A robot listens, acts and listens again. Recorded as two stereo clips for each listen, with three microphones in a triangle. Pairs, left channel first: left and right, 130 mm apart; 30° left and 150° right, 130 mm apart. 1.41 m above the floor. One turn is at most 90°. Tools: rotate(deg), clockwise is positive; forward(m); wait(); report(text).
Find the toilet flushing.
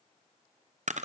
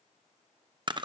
wait()
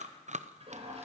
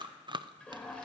rotate(50)
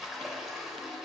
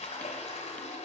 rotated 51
report("Found it: a toilet flushing, straight ahead, over 4 m away.")